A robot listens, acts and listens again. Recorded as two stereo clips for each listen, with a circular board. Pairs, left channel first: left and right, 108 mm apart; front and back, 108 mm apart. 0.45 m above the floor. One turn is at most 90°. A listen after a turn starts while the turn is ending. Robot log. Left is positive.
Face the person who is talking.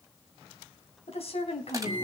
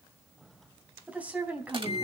note: The woman speaking: 105° left.
cmd yaw +90
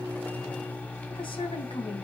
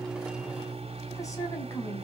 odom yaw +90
note: Nothing new. It was at 15° left.
cmd yaw +15
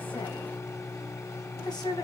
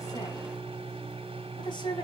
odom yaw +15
note: The woman speaking is now 45° left.
cmd yaw +45
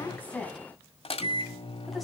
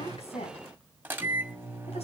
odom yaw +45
cmd idle
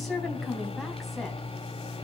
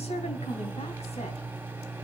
cmd idle
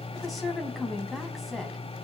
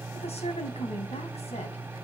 end: I heard a woman speaking from this way, but can't make it out now.